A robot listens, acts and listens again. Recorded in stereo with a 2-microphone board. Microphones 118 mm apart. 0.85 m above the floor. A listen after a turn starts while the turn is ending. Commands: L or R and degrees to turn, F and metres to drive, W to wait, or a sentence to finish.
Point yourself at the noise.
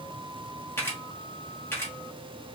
L20
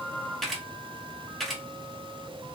Found it: a camera shutter, straight ahead.